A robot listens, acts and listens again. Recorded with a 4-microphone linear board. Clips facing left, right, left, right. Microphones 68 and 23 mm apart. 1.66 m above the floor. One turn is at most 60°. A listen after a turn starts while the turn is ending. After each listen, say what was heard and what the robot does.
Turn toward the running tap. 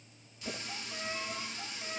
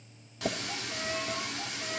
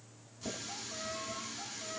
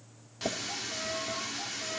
The running tap: about 75° right or 105° right. Turn 60° right.
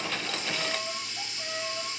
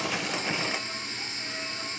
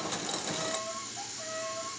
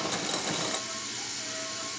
So it is at 35° right. Turn 35° right.
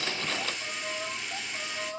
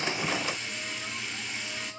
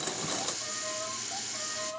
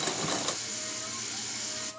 Found it: a running tap, straight ahead.